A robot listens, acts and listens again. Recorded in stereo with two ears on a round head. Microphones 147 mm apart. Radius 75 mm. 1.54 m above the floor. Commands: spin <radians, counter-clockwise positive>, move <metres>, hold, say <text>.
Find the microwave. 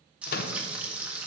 spin 1.05
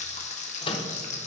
spin 0.61
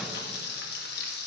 hold
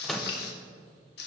say Found it: a microwave, straight ahead, under 1 m away.